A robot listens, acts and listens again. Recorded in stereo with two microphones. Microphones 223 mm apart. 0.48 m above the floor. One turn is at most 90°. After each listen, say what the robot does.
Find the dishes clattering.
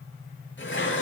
Turn 60° left.
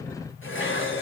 Turn 65° left.
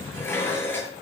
Turn 10° left.
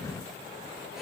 Keep listening.
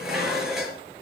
Facing the dishes clattering.